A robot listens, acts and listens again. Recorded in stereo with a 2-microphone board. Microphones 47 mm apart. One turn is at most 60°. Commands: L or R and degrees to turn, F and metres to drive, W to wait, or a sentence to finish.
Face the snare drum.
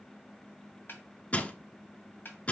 L45
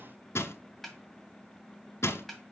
Found it: a snare drum, straight ahead.